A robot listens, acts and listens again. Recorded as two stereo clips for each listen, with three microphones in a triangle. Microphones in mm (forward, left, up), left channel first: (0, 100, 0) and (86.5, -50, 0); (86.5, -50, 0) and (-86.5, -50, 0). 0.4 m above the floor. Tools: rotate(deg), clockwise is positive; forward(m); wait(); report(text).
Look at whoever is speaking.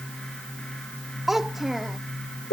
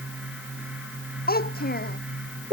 rotate(-30)
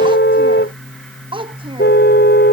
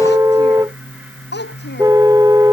report("Facing the child speaking.")